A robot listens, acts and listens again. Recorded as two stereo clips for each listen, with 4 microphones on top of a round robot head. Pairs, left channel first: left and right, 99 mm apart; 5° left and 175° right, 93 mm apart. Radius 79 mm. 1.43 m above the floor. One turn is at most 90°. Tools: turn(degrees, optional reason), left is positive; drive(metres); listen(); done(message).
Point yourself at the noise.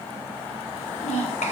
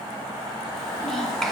turn(degrees=90, reason="The child speaking: 90° left.")
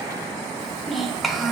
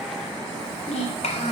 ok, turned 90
done("Found it: a child speaking, straight ahead.")